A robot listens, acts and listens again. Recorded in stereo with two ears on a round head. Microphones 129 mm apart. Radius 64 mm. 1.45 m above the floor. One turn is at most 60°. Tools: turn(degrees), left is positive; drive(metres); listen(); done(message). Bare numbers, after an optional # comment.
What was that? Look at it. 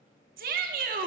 # The shout: about 70° right or 110° right.
turn(-60)
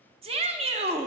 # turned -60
# So it is at 45° right.
turn(-45)
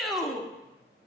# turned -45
done("Facing the shout.")